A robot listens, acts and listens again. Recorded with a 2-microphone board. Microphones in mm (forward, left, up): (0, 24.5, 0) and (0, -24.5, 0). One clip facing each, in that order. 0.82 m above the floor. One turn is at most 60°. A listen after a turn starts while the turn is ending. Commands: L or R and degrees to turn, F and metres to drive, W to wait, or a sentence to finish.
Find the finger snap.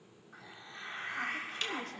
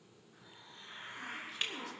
R15
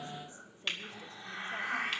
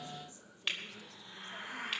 Facing the finger snap, 2 to 4 m away.